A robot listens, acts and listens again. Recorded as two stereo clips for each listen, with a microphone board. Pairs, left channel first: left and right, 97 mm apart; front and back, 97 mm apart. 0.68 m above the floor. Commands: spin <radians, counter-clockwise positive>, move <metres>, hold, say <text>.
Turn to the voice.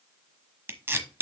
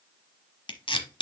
hold
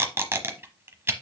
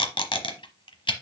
hold
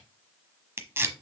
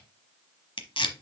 say I can't make out anyone speaking to turn to.